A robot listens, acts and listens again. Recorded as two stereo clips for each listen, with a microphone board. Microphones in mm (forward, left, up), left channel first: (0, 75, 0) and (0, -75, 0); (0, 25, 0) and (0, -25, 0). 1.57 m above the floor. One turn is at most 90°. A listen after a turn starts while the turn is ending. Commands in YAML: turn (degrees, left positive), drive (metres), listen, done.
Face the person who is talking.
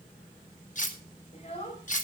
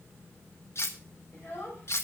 turn: 45
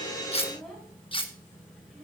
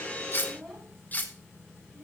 listen: true
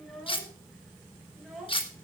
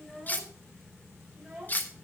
done: "Found it: a child speaking, straight ahead, over 4 m away."